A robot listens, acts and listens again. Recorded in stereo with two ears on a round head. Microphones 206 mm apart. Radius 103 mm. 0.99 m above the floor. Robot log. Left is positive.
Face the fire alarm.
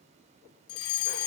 note: The fire alarm: about 70° left or 110° left.
cmd yaw +70
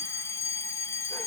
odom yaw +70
note: So it is at 15° left.
cmd yaw +15
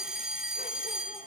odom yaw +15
end: Found it: a fire alarm, straight ahead.